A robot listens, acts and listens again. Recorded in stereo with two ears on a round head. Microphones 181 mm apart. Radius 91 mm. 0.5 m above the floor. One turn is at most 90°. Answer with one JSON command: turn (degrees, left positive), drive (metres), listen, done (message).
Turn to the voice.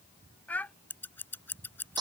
{"turn": 30}
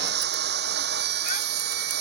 {"listen": true}
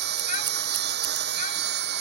{"listen": true}
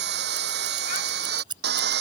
{"done": "I heard a child speaking, but can't make it out now. It was about 20° right or 140° left."}